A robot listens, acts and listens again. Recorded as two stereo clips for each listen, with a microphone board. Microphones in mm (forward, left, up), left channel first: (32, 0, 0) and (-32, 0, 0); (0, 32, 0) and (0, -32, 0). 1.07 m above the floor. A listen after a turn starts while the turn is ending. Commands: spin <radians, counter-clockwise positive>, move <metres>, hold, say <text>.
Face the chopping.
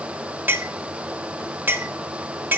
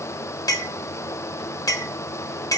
hold
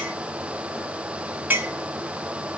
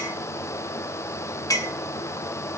hold
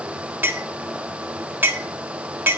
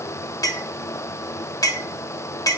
say I can't make out chopping to turn to.